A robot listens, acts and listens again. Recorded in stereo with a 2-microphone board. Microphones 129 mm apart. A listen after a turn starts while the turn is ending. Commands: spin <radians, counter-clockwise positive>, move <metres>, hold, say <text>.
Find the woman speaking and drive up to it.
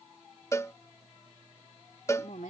spin 1.57
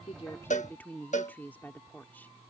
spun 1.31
spin 0.26
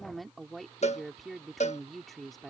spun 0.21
move 1.0
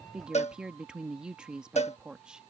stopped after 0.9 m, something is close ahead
say I am next to the woman speaking.